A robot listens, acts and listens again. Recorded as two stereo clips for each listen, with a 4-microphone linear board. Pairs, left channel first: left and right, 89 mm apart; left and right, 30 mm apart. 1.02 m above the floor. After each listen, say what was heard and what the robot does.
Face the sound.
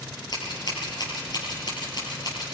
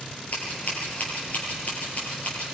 The scissors: about 55° left or 125° left. Turn 55° left.
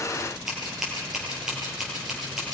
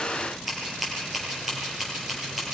Facing the scissors.